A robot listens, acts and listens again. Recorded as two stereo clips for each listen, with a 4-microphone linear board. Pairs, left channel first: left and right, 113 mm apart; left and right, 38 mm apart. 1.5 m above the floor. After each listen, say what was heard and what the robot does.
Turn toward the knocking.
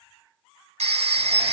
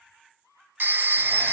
Keep listening.
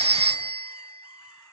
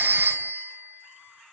Keep listening.
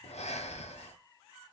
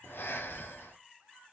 I can't make out knocking to turn to.